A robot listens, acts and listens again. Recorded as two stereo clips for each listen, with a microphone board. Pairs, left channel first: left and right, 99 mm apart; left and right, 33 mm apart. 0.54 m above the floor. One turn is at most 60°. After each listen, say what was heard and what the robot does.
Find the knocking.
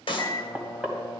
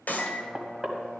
Turn 30° right.
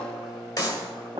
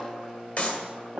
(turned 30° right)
So it is at 140° right. Turn 60° right.
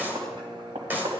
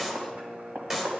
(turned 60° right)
The knocking is now 80° right. Turn 60° right.
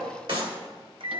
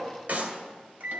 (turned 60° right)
Nothing new. It was at 20° right. Turn 20° right.
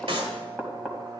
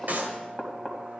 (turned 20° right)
The knocking is now 10° right. Turn 10° right.
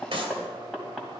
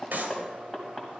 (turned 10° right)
Facing the knocking.